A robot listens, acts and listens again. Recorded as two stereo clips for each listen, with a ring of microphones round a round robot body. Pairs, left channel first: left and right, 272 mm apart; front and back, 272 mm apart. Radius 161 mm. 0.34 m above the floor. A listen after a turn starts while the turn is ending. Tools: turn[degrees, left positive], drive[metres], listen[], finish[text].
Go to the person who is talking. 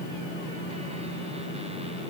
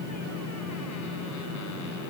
Action: listen[]
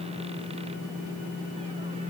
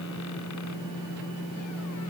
Action: listen[]
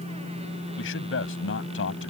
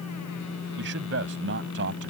Thought: The man speaking: 135° left.
Action: turn[135]
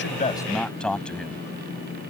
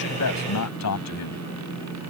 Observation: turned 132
Action: drive[1.0]
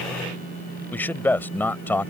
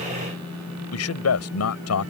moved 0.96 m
Thought: The man speaking is now 10° left.
Action: turn[10]
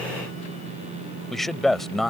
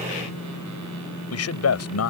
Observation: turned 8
Action: drive[1.0]
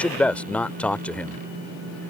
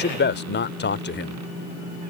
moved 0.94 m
Action: drive[1.0]
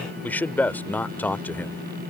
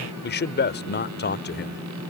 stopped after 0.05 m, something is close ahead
Thought: The man speaking is now 10° left.
Action: turn[10]
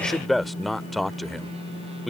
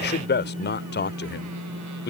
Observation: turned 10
Action: finish[I am next to the man speaking.]